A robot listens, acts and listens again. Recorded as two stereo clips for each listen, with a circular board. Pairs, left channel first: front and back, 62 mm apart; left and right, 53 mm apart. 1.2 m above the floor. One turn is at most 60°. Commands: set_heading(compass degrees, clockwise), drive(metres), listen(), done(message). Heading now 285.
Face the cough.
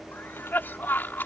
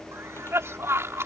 set_heading(340)
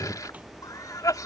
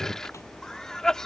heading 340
set_heading(330)
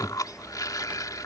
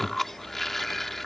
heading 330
done("Found it: a cough, straight ahead.")